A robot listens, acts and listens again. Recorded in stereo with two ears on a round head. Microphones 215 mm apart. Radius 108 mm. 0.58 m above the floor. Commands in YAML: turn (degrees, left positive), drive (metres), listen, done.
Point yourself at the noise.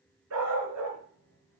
turn: -65
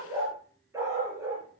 turn: -15
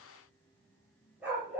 done: "Facing the dog barking."